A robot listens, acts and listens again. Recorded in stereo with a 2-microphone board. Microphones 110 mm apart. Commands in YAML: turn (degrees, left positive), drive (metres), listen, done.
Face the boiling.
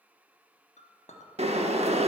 turn: -65
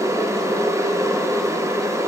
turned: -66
turn: -30
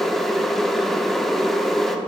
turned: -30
done: "Facing the boiling."